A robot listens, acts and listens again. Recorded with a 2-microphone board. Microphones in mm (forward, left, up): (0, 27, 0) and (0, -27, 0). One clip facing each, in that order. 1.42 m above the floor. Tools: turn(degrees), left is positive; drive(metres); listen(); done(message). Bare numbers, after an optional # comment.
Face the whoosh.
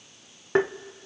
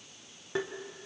listen()
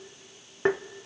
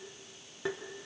listen()
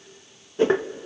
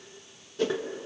# The whoosh: about 30° left or 150° left.
turn(30)
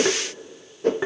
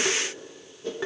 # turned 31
# So it is at 120° left.
turn(120)
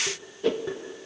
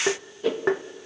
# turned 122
done("Found it: a whoosh, straight ahead, 1 to 2 m away.")